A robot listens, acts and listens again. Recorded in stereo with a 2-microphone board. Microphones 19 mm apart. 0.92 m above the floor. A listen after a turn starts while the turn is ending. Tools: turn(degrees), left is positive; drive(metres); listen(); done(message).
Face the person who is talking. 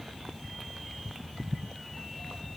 listen()
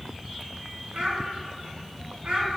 turn(degrees=-90)
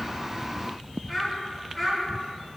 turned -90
turn(degrees=15)
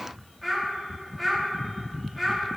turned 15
turn(degrees=10)
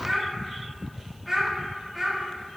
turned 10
done("Found it: a child speaking, straight ahead.")